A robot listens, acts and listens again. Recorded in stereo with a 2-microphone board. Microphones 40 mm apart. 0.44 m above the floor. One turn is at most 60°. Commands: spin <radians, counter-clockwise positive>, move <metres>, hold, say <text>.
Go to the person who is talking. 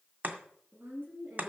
spin -1.05
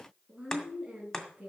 spin -0.35
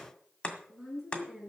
move 1.0
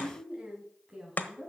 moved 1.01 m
spin -0.17
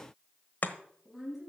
move 1.0
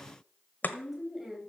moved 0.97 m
move 1.0
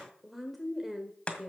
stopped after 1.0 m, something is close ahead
say I am next to the woman speaking.